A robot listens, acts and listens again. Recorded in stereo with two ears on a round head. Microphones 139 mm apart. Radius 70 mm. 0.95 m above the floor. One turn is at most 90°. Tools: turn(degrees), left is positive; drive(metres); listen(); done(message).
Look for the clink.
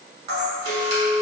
turn(degrees=-70)
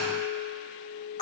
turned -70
turn(degrees=-40)
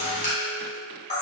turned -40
listen()
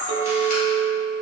turn(degrees=-30)
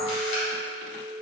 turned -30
done("Found it: a clink, straight ahead.")